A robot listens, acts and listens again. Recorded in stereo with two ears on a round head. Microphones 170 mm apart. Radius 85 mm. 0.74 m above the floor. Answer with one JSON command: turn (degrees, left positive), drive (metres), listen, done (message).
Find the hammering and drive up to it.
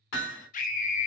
{"turn": 70}
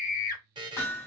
{"turn": 15}
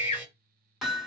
{"drive": 1.0}
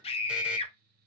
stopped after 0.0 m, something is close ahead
{"listen": true}
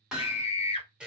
{"done": "Blocked. The hammering is further on, straight ahead."}